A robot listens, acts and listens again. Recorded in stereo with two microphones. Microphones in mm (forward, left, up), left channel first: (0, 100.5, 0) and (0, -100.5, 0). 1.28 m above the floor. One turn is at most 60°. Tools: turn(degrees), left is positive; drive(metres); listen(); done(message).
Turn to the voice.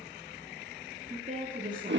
turn(degrees=-40)
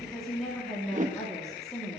done("Facing the woman speaking, 2 to 4 m away.")